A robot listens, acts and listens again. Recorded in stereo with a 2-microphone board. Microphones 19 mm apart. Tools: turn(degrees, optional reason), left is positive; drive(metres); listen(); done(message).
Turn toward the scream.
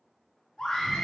turn(degrees=75, reason="The scream: about 75° left or 105° left.")
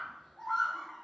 turn(degrees=25, reason="So it is at 25° left.")
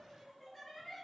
done("Facing the scream, 1 to 2 m away.")